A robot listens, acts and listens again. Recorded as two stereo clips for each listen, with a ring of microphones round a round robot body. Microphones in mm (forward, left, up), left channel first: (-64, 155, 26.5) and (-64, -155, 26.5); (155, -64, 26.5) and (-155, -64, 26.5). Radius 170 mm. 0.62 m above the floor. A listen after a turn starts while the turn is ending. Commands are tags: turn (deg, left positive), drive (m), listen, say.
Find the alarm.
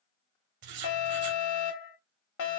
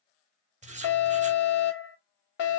<turn deg="55"/>
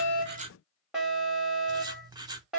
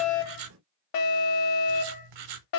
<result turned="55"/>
<say>Facing the alarm.</say>